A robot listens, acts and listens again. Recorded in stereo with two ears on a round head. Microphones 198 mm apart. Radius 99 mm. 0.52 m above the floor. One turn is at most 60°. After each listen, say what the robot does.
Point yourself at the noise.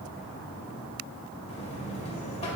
Turn 30° left.
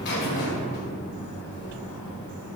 Turn 60° left.
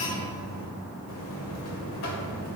Turn 60° left.
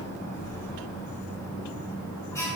Turn 15° left.
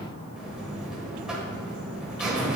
Found it: a buzzer, straight ahead.